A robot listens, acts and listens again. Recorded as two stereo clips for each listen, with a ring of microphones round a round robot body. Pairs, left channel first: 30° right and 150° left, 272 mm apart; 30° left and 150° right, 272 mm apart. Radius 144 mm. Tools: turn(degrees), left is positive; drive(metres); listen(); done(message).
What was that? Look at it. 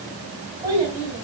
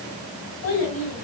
turn(degrees=70)
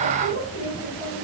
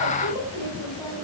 turn(degrees=15)
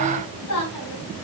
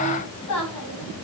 done("Found it: a child speaking, straight ahead, over 4 m away.")